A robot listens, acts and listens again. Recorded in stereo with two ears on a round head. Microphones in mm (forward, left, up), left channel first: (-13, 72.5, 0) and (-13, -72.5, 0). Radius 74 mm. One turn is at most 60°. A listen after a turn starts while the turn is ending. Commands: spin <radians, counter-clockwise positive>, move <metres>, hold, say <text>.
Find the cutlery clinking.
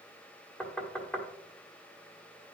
hold
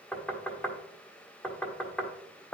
hold
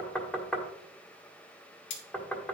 spin 1.05
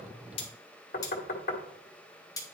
spin 0.35
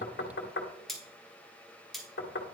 say Facing the cutlery clinking, 1 to 2 m away.